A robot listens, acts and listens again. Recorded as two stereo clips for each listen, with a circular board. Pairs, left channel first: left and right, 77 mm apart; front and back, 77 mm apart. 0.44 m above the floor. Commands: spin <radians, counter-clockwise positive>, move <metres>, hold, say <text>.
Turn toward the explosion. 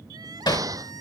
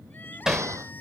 spin -2.27
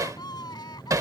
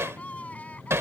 say I heard an explosion from this way, but can't make it out now.